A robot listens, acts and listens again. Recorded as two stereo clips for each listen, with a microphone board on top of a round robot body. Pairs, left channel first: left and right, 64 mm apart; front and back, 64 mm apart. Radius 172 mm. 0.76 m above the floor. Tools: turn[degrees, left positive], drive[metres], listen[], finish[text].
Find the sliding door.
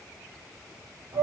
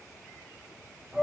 Action: listen[]
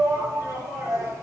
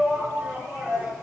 Thought: The sliding door: 140° right.
Action: turn[-140]
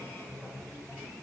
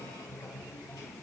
Action: listen[]
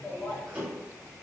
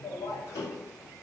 Thought: The sliding door is now 20° right.
Action: turn[-20]
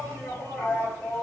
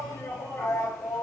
Action: listen[]
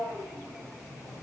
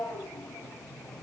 Action: listen[]
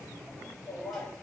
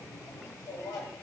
Action: finish[I heard a sliding door from this way, but can't make it out now.]